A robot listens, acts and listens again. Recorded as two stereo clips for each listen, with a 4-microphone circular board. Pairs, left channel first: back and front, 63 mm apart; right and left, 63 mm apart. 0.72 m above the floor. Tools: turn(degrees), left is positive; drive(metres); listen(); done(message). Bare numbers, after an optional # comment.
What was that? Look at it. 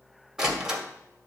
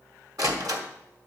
# The door slam: 80° left.
turn(80)
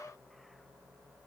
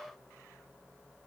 done("Facing where the door slam came from. I can't hear it now.")